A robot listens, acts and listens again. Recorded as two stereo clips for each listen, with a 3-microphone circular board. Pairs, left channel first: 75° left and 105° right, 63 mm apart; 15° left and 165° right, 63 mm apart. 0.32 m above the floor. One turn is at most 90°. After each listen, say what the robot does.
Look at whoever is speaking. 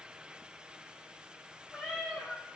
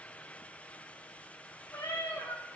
Keep listening.
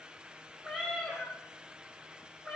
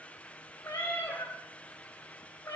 Keep listening.
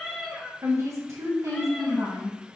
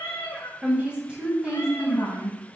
Turn 90° right.
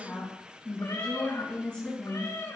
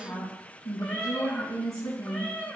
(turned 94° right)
Turn 10° left.
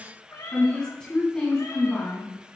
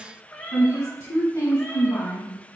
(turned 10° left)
Facing the woman speaking.